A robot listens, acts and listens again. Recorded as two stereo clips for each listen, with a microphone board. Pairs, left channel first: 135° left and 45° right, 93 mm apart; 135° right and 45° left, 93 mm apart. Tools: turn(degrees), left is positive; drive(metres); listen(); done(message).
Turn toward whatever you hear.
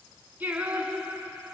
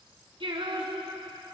turn(degrees=25)
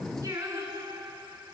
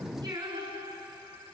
done("Facing the singing.")